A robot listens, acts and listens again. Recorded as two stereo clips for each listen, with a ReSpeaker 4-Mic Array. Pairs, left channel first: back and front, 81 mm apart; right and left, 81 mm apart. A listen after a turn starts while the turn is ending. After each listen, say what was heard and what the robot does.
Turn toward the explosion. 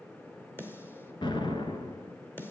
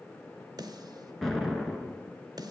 The explosion: 175° right. Turn 175° right.
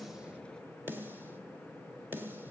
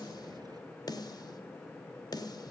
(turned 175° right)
Facing where the explosion came from. I can't hear it now.